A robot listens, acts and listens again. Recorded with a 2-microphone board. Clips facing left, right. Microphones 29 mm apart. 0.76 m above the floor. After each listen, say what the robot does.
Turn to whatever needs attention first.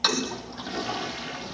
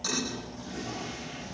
Keep listening.
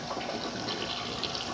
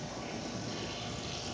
Keep listening.
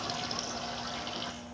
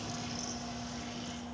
I can't make out anything urgent, only a toilet flushing.